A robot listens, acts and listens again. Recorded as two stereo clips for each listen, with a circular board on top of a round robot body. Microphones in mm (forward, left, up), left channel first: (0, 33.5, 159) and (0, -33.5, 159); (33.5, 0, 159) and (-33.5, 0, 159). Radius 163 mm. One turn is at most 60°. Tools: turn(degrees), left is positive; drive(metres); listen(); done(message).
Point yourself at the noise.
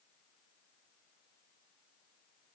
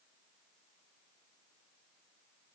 listen()
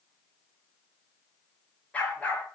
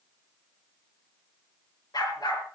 turn(degrees=20)
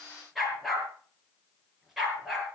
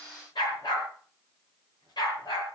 done("Facing the dog barking, over 4 m away.")